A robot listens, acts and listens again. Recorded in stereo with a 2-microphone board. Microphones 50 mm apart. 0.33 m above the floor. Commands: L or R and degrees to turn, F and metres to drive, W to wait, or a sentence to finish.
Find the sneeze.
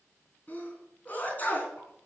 L35
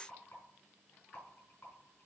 W
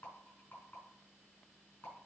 I heard a sneeze, but can't make it out now. It was about straight ahead or 110° left.